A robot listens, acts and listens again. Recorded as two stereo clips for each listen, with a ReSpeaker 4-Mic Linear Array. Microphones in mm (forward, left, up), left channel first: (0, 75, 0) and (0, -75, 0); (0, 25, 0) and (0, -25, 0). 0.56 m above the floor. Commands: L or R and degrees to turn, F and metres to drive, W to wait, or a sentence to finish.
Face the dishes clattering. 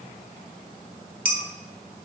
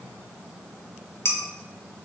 L60
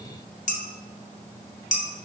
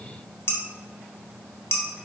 L60
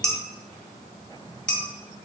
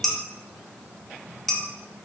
Found it: dishes clattering, straight ahead.